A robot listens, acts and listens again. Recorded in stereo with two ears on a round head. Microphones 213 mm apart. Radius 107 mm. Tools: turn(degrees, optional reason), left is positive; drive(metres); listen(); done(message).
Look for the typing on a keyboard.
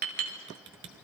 turn(degrees=-55, reason="The typing on a keyboard: about 55° right or 125° right.")
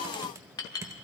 turn(degrees=-15, reason="So it is at 15° right.")
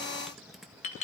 done("Facing the typing on a keyboard.")